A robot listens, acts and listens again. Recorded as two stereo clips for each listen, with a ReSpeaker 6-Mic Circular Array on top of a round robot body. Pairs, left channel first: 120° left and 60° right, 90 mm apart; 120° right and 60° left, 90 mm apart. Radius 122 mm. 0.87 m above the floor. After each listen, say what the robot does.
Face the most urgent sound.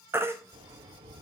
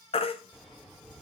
Turn 125° right.
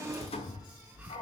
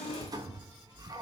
Keep listening.
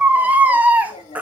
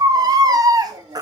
Turn 15° left.
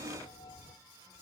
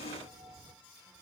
Keep listening.
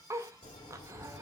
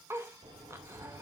Keep listening.
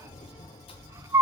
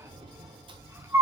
Found it: a baby crying, straight ahead.